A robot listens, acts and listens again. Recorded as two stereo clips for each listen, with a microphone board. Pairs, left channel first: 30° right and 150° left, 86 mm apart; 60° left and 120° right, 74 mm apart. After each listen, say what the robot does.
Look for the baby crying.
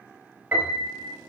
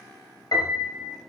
Keep listening.
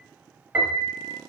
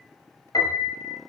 Keep listening.
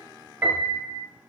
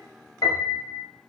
I can't make out a baby crying, only a piano.